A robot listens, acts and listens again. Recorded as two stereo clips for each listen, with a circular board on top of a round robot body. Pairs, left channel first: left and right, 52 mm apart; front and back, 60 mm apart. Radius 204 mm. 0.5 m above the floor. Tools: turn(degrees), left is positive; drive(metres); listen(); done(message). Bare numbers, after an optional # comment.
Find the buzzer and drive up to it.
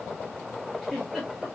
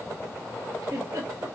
listen()
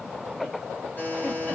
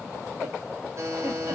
# The buzzer: 145° left.
turn(145)
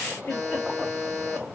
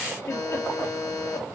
# The buzzer is now 10° left.
turn(10)
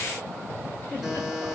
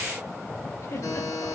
drive(1.0)
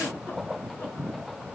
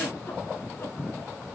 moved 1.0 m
listen()
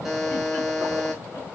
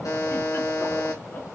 drive(1.0)
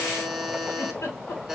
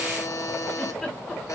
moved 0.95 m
drive(1.0)
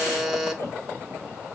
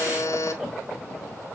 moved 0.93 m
drive(1.0)
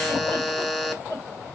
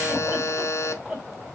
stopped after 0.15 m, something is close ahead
# The buzzer is now 10° left.
turn(10)
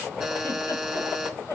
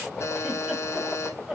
done("Arrived at the buzzer, straight ahead.")